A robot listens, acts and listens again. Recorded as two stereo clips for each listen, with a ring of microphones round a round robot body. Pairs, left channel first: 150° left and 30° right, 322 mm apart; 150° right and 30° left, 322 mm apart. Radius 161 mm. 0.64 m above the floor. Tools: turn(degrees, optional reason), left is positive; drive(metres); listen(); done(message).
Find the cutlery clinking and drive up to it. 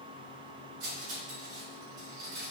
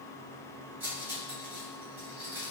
turn(degrees=-55, reason="The cutlery clinking: 55° right.")
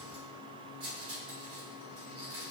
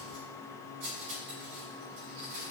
turn(degrees=25, reason="The cutlery clinking is now 25° left.")
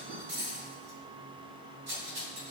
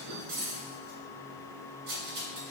drive(metres=1.0)
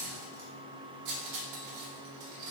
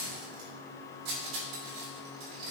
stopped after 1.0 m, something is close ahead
done("Arrived at the cutlery clinking, straight ahead.")